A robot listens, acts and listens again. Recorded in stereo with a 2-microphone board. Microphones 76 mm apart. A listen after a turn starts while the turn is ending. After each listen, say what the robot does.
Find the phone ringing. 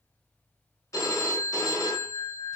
Turn 45° left.
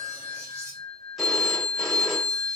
Found it: a phone ringing, straight ahead.